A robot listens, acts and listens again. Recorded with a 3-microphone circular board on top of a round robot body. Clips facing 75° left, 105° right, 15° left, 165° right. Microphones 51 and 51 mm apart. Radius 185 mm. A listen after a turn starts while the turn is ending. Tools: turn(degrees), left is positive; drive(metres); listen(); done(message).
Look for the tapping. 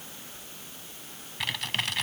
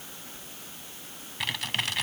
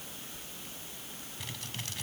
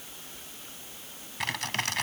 listen()
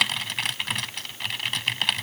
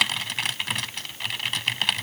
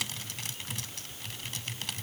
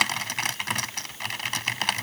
listen()
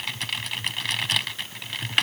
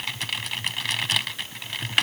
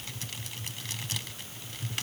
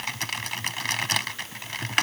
done("I can't make out tapping to turn to.")